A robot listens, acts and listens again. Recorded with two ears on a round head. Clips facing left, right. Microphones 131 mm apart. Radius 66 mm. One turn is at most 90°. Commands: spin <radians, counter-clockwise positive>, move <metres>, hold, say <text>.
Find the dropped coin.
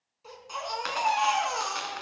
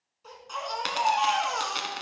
spin -0.61
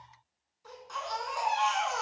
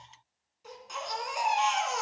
hold
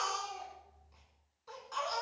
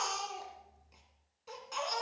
say I heard a dropped coin, but can't make it out now. It was about straight ahead or 110° right.